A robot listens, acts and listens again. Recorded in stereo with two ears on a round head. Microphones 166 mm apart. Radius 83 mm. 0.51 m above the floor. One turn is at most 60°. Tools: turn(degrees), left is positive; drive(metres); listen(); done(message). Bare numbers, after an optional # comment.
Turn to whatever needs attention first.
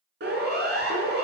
# The siren: about 60° right or 120° right.
turn(-60)
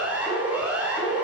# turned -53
done("Found it: a siren, straight ahead.")